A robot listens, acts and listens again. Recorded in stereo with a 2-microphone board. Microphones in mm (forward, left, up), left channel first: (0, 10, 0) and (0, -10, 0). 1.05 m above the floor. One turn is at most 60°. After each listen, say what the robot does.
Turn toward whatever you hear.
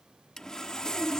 Turn 30° left.
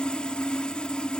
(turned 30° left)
Turn 60° left.
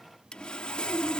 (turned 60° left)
Turn 60° left.
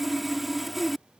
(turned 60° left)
Found it: sawing, straight ahead.